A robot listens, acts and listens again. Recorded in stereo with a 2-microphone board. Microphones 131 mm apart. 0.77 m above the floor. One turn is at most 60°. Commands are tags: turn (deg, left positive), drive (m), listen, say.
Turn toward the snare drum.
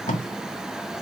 <listen/>
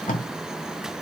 <listen/>
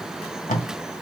<say>I can't make out a snare drum to turn to.</say>